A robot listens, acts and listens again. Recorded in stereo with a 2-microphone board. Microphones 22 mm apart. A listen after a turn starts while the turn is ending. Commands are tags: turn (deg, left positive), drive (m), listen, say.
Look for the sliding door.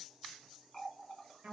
<listen/>
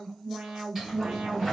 <turn deg="-30"/>
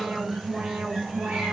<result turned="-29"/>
<turn deg="-135"/>
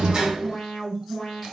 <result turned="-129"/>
<turn deg="-10"/>
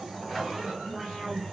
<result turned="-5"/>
<say>Facing the sliding door.</say>